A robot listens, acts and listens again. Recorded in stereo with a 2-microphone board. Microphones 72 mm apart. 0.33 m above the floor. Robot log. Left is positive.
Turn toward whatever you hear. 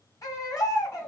note: The baby crying: about 55° left or 125° left.
cmd yaw +55
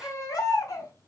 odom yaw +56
note: So it is at 60° left.
cmd yaw +60
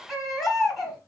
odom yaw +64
end: Found it: a baby crying, straight ahead, 1 to 2 m away.